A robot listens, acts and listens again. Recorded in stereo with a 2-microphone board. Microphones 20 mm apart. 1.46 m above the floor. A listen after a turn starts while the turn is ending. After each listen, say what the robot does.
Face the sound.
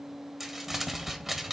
Turn 30° right.
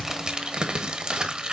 Turn 140° right.
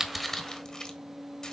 Turn 30° left.
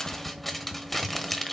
Turn 10° left.
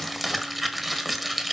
Found it: crumpling, straight ahead, 1 to 2 m away.